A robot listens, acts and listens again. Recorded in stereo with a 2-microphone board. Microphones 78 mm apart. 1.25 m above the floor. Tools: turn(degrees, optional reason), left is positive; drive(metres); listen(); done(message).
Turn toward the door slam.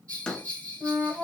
turn(degrees=30)
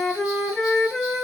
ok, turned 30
listen()
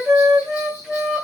done("I heard a door slam, but can't make it out now. It was about 20° right or 140° left.")